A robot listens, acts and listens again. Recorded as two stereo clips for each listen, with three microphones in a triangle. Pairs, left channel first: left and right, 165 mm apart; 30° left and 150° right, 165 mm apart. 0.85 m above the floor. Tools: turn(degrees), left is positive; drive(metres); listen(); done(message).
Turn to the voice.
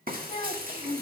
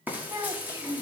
turn(degrees=145)
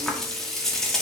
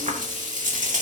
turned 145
listen()
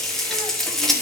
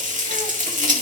listen()
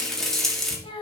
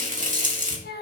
turn(degrees=30)
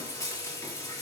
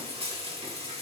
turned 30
listen()
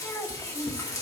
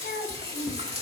turn(degrees=15)
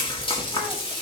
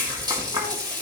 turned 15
listen()
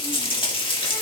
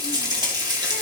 listen()
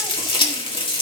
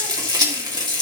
done("I heard a child speaking from this way, but can't make it out now.")